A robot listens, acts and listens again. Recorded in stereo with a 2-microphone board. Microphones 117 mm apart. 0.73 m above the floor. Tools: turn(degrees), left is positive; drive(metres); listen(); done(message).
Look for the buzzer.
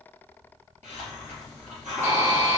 turn(degrees=-25)
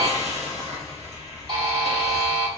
turn(degrees=-130)
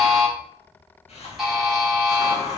done("Facing the buzzer.")